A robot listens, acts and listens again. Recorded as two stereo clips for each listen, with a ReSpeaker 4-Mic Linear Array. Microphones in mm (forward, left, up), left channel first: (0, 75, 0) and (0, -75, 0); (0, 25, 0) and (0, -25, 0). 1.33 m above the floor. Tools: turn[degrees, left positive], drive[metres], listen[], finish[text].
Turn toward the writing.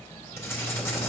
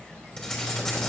Thought: The writing: about 15° left or 165° left.
Action: turn[15]
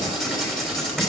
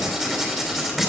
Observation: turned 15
Action: finish[Found it: writing, straight ahead.]